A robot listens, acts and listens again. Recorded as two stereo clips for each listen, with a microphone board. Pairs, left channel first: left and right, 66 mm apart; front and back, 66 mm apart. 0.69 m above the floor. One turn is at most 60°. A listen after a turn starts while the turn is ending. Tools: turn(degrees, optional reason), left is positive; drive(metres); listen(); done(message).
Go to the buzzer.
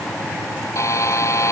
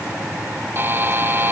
turn(degrees=60, reason="The buzzer: 125° left.")
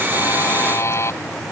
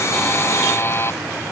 turn(degrees=50, reason="The buzzer is now 50° left.")
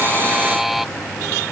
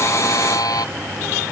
drive(metres=1.0)
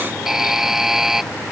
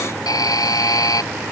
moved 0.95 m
drive(metres=1.0)
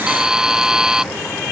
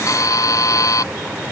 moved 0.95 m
turn(degrees=-10, reason="The buzzer is now 10° right.")
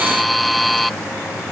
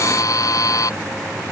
drive(metres=1.0)
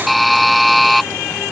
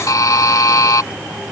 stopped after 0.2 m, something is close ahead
done("I am next to the buzzer.")